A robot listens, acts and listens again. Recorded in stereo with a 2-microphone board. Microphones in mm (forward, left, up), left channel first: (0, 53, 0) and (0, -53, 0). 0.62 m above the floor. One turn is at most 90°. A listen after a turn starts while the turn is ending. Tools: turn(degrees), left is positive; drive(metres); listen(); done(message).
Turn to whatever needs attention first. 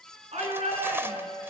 turn(degrees=-75)
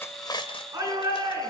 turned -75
turn(degrees=-30)
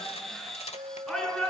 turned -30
done("Found it: a shout, straight ahead, over 4 m away.")